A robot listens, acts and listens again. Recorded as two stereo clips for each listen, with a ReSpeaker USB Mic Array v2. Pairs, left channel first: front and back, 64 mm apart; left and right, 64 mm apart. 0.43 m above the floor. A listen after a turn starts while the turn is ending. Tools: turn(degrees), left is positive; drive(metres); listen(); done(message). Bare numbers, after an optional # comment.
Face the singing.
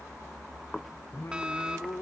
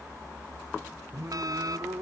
# The singing: 45° right.
turn(-45)
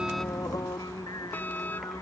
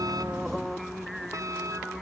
done("Found it: singing, straight ahead.")